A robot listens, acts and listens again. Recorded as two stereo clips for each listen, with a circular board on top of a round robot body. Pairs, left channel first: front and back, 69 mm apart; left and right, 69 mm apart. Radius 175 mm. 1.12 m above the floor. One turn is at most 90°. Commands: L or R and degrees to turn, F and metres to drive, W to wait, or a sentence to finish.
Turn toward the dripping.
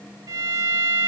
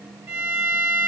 W
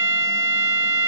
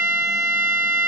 W
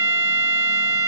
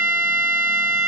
I can't make out dripping, only a violin.